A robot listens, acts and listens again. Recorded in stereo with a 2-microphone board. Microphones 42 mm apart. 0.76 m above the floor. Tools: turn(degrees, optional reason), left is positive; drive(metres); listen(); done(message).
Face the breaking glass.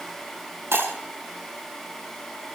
turn(degrees=-90)
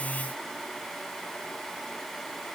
done("I heard breaking glass from this way, but can't make it out now.")